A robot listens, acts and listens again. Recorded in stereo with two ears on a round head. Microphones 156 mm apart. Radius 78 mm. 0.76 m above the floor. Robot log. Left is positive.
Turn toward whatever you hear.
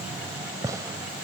note: The gunshot: about 20° right or 160° right.
cmd yaw -20
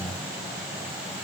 cmd idle
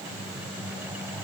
end: I heard a gunshot, but can't make it out now. It was about straight ahead or 140° right.